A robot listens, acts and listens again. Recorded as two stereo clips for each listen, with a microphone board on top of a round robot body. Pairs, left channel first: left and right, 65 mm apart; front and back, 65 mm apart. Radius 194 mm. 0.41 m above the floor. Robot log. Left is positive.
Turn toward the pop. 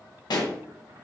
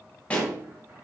note: The pop: 75° left.
cmd yaw +75
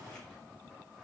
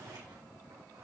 end: I heard a pop from this way, but can't make it out now.